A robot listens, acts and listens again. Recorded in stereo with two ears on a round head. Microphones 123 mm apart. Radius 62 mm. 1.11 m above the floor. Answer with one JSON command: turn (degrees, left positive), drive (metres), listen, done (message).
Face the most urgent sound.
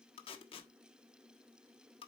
{"listen": true}
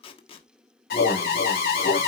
{"turn": 90}
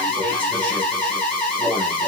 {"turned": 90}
{"turn": 10}
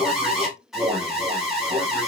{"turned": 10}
{"done": "Found it: an alarm, straight ahead."}